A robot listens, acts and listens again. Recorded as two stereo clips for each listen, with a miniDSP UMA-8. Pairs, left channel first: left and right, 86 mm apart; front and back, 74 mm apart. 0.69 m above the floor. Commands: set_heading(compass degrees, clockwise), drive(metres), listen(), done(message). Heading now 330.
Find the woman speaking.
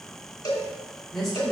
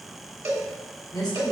done("Facing the woman speaking, 2 to 4 m away.")